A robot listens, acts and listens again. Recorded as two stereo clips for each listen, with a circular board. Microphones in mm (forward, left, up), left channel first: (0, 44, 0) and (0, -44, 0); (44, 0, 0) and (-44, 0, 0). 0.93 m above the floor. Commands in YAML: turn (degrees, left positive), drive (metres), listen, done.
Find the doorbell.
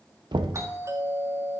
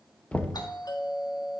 turn: -35
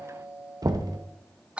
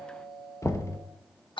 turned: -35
turn: -15
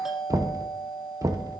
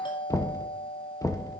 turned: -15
done: "Found it: a doorbell, straight ahead."